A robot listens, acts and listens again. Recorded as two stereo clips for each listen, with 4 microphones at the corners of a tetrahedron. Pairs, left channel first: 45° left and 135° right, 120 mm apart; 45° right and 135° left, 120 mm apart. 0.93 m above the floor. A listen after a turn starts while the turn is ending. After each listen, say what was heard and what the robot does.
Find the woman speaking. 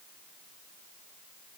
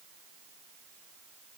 Keep listening.
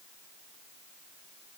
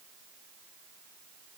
Keep listening.
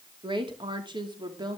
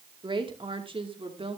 The woman speaking: 170° left. Turn 170° left.
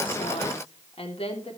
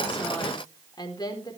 The woman speaking is now 10° left. Turn 10° left.
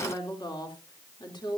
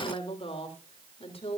The woman speaking is now 10° right. Turn 10° right.
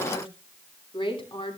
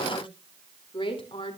Facing the woman speaking, 2 to 4 m away.